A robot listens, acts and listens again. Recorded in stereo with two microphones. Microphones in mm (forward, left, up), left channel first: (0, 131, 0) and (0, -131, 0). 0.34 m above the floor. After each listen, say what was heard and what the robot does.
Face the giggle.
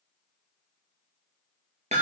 Keep listening.
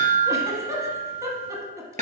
Turn 30° right.
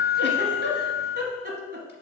So it is at 140° right. Turn 140° right.
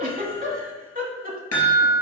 The giggle is now 35° right. Turn 35° right.
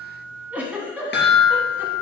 Facing the giggle.